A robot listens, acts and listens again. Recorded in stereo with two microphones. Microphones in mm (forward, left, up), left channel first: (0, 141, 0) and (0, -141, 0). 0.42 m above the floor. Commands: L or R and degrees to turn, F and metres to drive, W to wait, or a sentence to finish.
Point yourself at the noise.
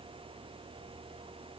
W
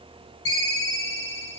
L50
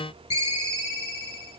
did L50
L70
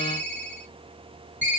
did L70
L10
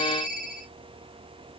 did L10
Found it: a ringtone, straight ahead.